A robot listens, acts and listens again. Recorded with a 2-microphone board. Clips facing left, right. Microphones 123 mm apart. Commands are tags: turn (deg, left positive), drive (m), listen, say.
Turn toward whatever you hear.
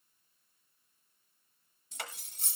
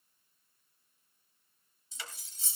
<turn deg="60"/>
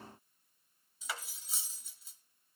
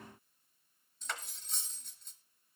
<say>Found it: cutlery clinking, straight ahead, 1 to 2 m away.</say>